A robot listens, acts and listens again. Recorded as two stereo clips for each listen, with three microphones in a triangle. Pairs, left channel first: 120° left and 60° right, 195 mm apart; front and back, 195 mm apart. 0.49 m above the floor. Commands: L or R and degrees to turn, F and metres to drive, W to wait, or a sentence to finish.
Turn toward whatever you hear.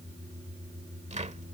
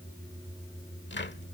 R10
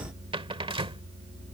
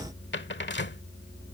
Facing the cupboard door.